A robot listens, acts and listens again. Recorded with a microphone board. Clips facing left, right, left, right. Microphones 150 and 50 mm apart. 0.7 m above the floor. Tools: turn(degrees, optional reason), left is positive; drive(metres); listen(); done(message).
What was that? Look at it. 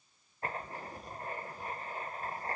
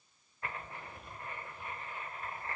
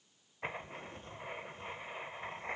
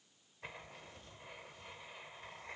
turn(degrees=40, reason="The writing: about 40° left or 140° left.")
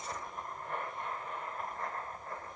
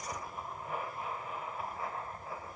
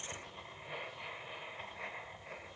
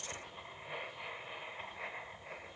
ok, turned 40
done("Facing the writing.")